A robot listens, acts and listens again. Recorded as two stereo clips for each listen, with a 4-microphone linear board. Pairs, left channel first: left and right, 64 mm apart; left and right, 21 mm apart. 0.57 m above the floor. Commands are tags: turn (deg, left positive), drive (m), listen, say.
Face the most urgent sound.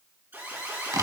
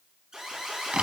<turn deg="-35"/>
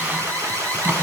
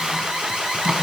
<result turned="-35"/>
<turn deg="-110"/>
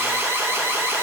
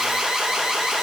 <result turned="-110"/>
<turn deg="-40"/>
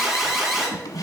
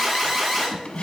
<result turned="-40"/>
<say>Found it: an alarm, straight ahead, 2 to 4 m away.</say>